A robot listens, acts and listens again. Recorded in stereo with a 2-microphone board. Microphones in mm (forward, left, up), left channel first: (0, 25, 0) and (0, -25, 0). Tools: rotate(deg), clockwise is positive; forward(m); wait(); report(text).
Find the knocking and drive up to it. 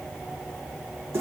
wait()
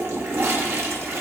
wait()
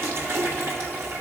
report("I can't make out knocking to turn to.")